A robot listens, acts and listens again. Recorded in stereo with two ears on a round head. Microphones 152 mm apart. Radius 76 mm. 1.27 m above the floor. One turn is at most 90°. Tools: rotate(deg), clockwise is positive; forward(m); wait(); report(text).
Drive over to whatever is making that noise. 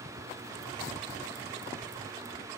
wait()
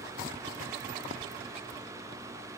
wait()
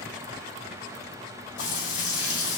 rotate(-90)
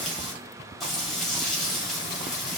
forward(1.0)
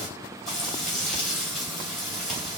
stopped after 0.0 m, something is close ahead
report("Something is in my way. I am facing the frying but have not reached it.")